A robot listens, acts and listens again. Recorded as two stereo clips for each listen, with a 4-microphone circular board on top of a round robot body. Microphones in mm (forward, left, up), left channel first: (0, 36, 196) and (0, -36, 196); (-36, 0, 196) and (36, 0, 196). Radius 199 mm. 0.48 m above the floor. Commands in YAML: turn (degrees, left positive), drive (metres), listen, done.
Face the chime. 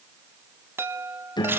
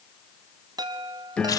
turn: -30
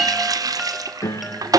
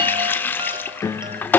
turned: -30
done: "Facing the chime."